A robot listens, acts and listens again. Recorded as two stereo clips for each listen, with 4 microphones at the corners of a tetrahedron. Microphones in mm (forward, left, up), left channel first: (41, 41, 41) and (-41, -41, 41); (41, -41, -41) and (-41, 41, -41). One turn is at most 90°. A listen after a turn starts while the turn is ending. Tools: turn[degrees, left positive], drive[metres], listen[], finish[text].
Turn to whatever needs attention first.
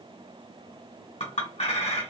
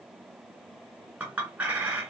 Action: listen[]
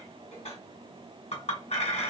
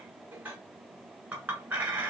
Action: listen[]
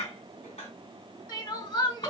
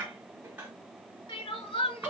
Thought: The crying: 10° right.
Action: turn[-10]
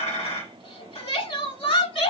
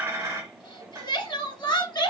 Action: finish[Facing the crying.]